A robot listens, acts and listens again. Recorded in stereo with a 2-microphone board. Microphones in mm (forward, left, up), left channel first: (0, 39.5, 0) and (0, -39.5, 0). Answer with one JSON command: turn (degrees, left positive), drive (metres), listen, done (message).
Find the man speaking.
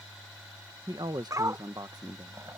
{"turn": -60}
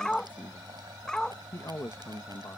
{"turn": 45}
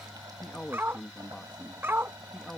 {"turn": 10}
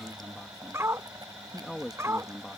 {"done": "Found it: a man speaking, straight ahead."}